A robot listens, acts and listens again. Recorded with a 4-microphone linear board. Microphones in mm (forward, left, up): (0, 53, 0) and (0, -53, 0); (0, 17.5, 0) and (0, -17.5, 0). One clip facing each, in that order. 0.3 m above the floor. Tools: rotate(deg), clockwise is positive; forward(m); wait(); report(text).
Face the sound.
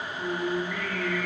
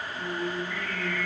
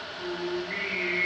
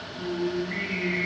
rotate(-35)
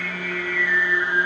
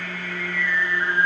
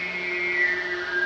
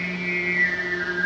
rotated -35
report("Facing the singing.")